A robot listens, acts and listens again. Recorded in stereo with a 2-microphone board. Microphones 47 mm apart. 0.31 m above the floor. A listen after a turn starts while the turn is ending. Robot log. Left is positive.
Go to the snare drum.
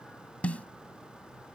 note: The snare drum: about 30° left or 150° left.
cmd yaw +30
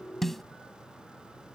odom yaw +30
cmd fwd 1.0
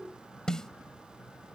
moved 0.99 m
note: The snare drum is now 20° left.
cmd yaw +20
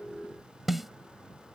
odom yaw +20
cmd fwd 1.0
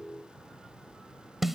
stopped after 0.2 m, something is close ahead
end: Arrived at the snare drum, straight ahead.